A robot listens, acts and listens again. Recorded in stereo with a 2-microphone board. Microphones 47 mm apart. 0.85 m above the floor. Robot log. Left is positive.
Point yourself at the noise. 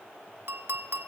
note: The clink: about 60° right or 120° right.
cmd yaw -60
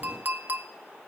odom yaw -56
note: So it is at 55° right.
cmd yaw -55
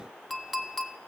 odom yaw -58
end: Facing the clink, under 1 m away.